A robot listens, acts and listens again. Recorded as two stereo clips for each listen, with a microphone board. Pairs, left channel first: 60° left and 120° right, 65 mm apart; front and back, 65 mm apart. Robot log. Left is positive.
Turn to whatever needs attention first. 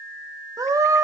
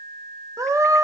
note: The scream: 145° right.
cmd yaw -145
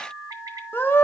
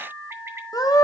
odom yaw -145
end: Found it: a scream, straight ahead.